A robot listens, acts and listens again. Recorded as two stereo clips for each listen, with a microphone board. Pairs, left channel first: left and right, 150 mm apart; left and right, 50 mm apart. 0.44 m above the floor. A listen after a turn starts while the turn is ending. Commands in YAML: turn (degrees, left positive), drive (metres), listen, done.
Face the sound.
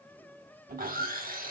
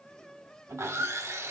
turn: -70
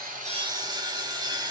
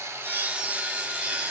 turn: -30
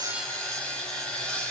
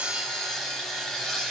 done: "Found it: sawing, straight ahead, 1 to 2 m away."